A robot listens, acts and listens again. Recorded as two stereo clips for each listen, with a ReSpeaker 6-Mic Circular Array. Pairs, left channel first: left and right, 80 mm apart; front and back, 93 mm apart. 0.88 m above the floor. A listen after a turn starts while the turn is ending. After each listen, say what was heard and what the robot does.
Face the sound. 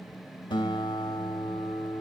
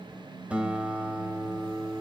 The guitar: 100° left. Turn 100° left.
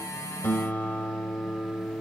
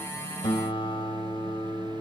The guitar is now 20° left. Turn 20° left.
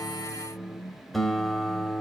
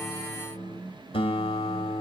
Facing the guitar.